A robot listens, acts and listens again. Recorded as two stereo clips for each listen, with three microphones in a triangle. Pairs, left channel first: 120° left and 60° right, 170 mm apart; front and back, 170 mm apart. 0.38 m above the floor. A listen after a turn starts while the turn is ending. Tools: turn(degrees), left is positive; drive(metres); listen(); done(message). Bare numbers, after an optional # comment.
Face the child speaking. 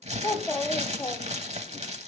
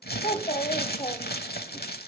# The child speaking: 55° left.
turn(55)
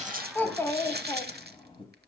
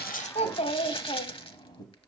# The child speaking is now 65° left.
turn(65)
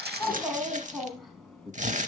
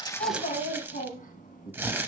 # The child speaking is now 35° left.
turn(35)
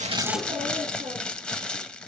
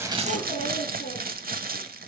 # The child speaking is now 10° right.
turn(-10)
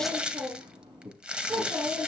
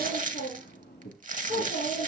done("Facing the child speaking, 2 to 4 m away.")